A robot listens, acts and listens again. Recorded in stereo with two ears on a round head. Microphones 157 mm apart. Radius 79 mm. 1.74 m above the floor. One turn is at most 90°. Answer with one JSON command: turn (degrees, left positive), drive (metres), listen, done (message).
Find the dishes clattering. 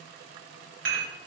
{"turn": -60}
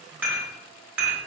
{"turn": -10}
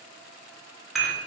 {"done": "Found it: dishes clattering, straight ahead, 1 to 2 m away."}